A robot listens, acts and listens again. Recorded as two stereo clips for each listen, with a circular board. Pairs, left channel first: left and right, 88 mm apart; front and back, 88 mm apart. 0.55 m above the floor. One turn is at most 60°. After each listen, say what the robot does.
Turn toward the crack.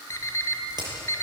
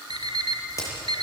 Turn 55° right.
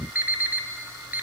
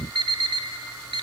I heard a crack from this way, but can't make it out now.